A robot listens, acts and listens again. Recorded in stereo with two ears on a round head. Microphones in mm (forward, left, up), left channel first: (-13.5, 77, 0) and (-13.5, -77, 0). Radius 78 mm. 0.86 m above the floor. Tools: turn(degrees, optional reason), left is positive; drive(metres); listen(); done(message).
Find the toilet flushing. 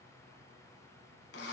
listen()
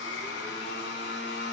listen()
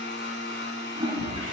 turn(degrees=-25, reason="The toilet flushing: about 25° right or 155° right.")
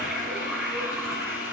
done("Facing the toilet flushing.")